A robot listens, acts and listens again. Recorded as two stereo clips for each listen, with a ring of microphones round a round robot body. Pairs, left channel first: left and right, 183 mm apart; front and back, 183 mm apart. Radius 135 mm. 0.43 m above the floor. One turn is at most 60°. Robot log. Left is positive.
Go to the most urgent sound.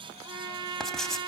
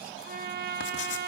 cmd idle
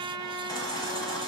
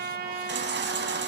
note: The baby crying: 165° left.
cmd yaw +60
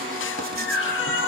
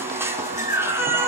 note: The baby crying is now 105° left.
cmd yaw +60
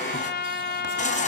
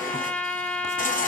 note: The baby crying is now 40° left.
cmd yaw +40
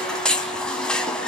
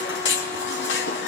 cmd fwd 1.0
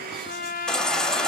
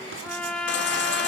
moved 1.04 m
cmd fwd 1.0
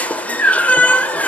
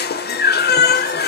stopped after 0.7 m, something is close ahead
note: The baby crying is now 10° left.
cmd yaw +10
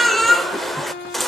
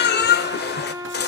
end: Arrived at the baby crying, straight ahead.